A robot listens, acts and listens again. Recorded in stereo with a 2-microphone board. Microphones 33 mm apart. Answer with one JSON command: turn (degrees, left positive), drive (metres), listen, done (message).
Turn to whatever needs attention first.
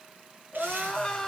{"turn": 15}
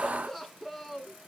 {"done": "Found it: crying, straight ahead."}